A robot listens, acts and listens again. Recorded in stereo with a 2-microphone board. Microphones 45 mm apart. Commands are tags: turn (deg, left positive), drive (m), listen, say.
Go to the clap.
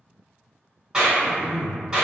<turn deg="-15"/>
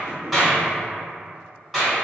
<drive m="1.0"/>
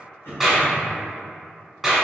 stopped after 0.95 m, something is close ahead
<turn deg="-10"/>
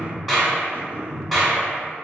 <say>I am next to the clap.</say>